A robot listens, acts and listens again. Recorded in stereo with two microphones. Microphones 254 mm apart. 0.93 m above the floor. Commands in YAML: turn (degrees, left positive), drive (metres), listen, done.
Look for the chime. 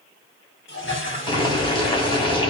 listen: true
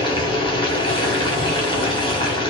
listen: true
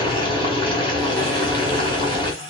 done: "I can't make out a chime to turn to."